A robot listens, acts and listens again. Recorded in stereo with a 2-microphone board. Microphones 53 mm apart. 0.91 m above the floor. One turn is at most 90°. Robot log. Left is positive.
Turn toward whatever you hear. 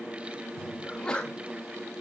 note: The sneeze: about 15° left or 165° left.
cmd yaw +15
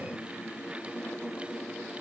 cmd idle
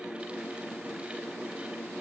end: I heard a sneeze, but can't make it out now. It was about straight ahead or 150° left.